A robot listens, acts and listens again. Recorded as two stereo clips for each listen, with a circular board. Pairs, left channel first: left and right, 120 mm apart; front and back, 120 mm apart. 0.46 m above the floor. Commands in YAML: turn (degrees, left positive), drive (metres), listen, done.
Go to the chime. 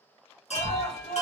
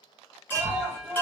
turn: 75
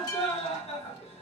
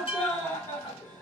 turn: 40
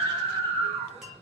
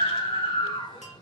listen: true
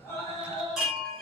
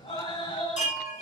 drive: 1.0
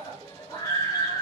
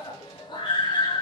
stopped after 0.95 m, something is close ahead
listen: true
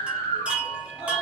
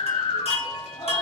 turn: -10
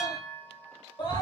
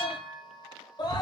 done: "Arrived at the chime, straight ahead."